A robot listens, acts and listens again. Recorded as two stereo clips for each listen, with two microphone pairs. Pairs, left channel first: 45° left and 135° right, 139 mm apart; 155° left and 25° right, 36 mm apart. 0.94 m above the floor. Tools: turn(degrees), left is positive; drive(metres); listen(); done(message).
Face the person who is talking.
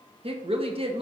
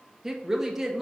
turn(degrees=-95)
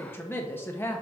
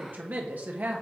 turn(degrees=-25)
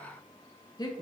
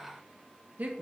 turn(degrees=-10)
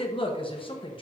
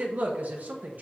done("Found it: a woman speaking, straight ahead.")